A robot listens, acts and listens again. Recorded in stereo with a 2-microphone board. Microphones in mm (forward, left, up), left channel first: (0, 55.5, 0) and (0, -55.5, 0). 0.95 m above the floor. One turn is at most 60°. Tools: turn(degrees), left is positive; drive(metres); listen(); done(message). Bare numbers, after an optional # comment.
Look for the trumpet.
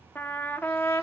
# The trumpet: about 20° left or 160° left.
turn(20)
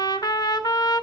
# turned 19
# So it is at 140° left.
turn(60)
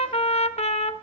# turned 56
# The trumpet is now 80° left.
turn(60)
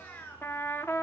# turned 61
# The trumpet is now 20° left.
turn(20)
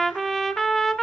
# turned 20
done("Found it: a trumpet, straight ahead.")